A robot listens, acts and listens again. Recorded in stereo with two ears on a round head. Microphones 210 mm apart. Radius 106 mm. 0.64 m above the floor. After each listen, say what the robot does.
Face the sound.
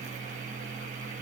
Keep listening.
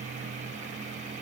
Keep listening.
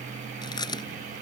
Turn 20° left.
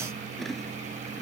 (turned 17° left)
Found it: chewing, straight ahead.